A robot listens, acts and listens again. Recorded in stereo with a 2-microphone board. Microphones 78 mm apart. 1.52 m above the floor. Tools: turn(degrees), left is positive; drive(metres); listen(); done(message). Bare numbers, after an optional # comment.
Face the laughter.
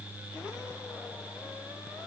listen()
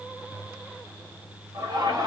# The laughter: about 50° right or 130° right.
turn(-50)
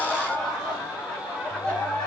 # So it is at 10° left.
turn(10)
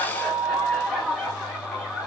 done("Facing the laughter.")